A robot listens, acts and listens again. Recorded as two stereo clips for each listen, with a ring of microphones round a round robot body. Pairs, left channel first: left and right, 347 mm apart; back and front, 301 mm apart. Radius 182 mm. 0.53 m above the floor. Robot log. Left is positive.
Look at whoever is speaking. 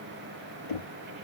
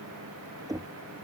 cmd idle
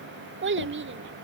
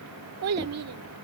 note: The child speaking: 35° right.
cmd yaw -35
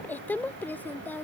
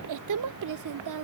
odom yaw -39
end: Facing the child speaking.